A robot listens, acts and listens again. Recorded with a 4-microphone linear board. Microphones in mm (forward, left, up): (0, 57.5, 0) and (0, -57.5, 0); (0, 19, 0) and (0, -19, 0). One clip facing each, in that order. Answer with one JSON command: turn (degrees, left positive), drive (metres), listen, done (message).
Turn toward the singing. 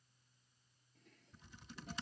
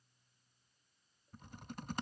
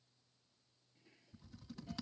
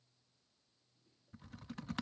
{"listen": true}
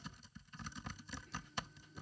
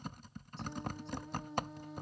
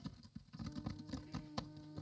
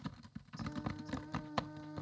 {"turn": -90}
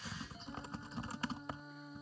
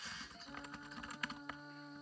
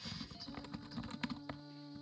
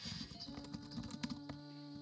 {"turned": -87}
{"done": "Facing the singing."}